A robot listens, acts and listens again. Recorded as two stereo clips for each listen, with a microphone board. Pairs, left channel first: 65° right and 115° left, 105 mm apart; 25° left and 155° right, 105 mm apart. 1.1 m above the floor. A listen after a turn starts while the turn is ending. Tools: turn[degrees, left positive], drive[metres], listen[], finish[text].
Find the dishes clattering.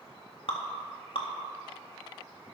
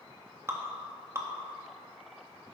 Action: listen[]
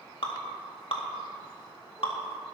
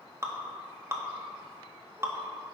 Action: listen[]
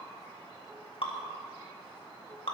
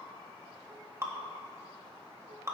Action: finish[I can't make out dishes clattering, only dripping.]